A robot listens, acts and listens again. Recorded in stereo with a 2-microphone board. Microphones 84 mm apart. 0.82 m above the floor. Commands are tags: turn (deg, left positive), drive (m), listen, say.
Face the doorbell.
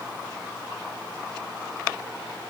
<listen/>
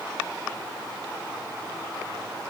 <listen/>
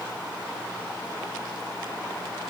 <say>I can't make out a doorbell.</say>